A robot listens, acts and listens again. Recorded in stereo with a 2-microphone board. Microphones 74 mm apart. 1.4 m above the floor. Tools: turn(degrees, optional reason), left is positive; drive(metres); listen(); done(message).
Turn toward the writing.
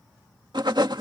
turn(degrees=-90)
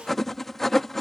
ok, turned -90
done("Facing the writing.")